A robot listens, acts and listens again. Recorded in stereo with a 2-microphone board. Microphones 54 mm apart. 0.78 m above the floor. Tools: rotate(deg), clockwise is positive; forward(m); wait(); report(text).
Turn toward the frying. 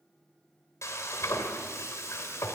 rotate(-65)
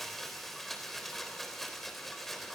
report("Facing the frying, 2 to 4 m away.")